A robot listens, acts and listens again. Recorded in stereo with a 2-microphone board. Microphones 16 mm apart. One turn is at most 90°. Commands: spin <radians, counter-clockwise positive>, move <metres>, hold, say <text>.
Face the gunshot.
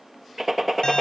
spin -0.35
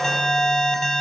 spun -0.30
hold
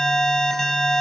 say I heard a gunshot, but can't make it out now. It was about straight ahead or 145° right.